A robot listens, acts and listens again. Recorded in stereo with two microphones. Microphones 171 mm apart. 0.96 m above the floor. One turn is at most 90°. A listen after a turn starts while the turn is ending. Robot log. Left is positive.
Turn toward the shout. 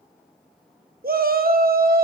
note: The shout: about 60° right or 120° right.
cmd yaw -60
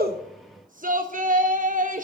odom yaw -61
note: So it is at 55° right.
cmd yaw -55
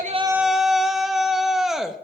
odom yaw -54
end: Found it: a shout, straight ahead.